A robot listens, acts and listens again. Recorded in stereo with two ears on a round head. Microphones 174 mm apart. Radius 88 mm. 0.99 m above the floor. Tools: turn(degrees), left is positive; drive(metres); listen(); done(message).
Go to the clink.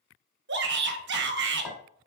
turn(degrees=20)
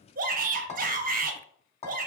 turn(degrees=145)
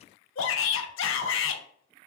listen()
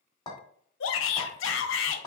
turn(degrees=20)
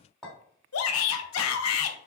drive(metres=1.0)
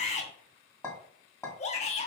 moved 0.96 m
turn(degrees=10)
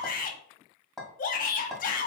drive(metres=1.0)
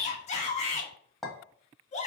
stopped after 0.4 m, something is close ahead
done("Arrived at the clink, straight ahead.")